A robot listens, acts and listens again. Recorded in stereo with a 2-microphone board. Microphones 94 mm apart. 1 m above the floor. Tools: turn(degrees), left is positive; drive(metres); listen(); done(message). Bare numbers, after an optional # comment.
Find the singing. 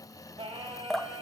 turn(-90)
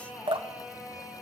done("Found it: singing, straight ahead.")